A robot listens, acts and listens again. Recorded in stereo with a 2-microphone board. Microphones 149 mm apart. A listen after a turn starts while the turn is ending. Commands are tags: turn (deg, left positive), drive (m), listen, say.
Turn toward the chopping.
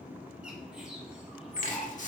<turn deg="60"/>
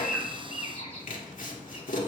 <turn deg="65"/>
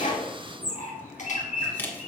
<turn deg="15"/>
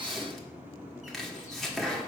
<say>Found it: chopping, straight ahead.</say>